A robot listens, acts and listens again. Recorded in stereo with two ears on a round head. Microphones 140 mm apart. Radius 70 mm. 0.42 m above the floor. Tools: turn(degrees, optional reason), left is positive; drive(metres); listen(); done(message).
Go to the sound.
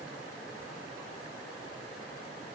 listen()
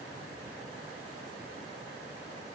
listen()
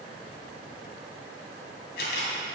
turn(degrees=70, reason="The camera shutter: about 70° left or 110° left.")
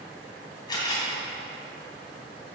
turn(degrees=30, reason="So it is at 30° left.")
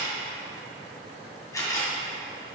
turn(degrees=20, reason="The camera shutter is now 20° left.")
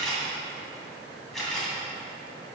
drive(metres=1.0)
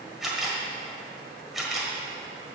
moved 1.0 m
drive(metres=1.0)
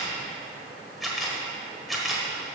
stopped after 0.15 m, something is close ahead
done("I am next to the camera shutter.")